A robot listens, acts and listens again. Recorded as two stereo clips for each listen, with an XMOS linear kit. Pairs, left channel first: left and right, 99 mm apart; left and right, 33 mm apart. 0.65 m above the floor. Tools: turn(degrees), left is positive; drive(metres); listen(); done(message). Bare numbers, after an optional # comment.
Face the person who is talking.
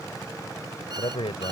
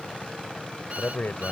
# The man speaking: about 75° left or 105° left.
turn(75)
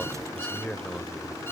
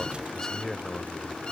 done("Facing the man speaking.")